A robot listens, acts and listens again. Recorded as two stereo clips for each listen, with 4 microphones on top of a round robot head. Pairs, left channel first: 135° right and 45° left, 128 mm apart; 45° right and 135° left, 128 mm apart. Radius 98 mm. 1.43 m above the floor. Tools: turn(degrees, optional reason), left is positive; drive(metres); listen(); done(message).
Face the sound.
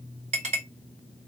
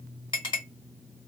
done("Facing the clink, 2 to 4 m away.")